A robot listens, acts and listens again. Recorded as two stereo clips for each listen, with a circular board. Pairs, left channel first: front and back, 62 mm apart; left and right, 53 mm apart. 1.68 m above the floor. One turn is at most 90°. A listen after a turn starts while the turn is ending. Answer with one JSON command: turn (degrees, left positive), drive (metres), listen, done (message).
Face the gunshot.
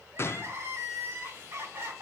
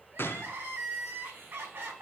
{"turn": 45}
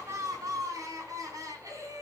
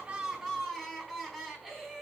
{"done": "I heard a gunshot from this way, but can't make it out now."}